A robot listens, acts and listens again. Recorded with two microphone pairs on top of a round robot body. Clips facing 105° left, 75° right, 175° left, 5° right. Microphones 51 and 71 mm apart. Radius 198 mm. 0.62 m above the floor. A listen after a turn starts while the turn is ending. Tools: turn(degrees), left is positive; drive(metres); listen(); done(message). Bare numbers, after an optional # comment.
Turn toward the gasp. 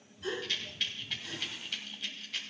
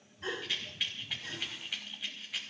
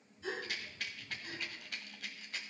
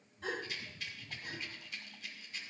# The gasp: 30° right.
turn(-30)
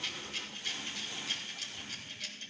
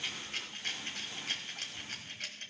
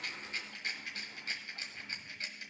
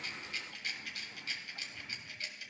done("I heard a gasp from this way, but can't make it out now.")